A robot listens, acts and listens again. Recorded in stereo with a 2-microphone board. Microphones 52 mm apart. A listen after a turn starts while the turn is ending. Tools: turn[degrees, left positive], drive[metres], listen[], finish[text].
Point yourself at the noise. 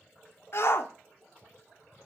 Thought: The shout: about 55° left or 125° left.
Action: turn[55]
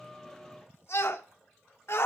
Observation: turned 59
Thought: So it is at 60° left.
Action: turn[60]
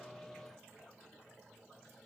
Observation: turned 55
Action: listen[]
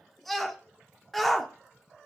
Action: finish[Facing the shout, 1 to 2 m away.]